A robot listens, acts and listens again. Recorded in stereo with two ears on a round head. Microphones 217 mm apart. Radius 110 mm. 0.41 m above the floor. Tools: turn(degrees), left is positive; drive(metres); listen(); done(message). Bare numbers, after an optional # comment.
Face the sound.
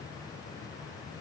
listen()
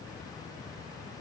listen()
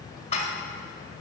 # The dishes clattering: about 30° left or 150° left.
turn(30)
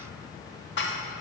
# So it is at 120° left.
turn(120)
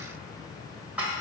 # The dishes clattering is now 10° right.
turn(-10)
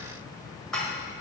done("Found it: dishes clattering, straight ahead.")